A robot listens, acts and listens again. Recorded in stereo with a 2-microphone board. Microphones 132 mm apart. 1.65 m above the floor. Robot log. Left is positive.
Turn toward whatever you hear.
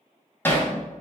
note: The hammering: about 15° left or 165° left.
cmd yaw +15
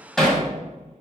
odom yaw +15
end: Found it: hammering, straight ahead.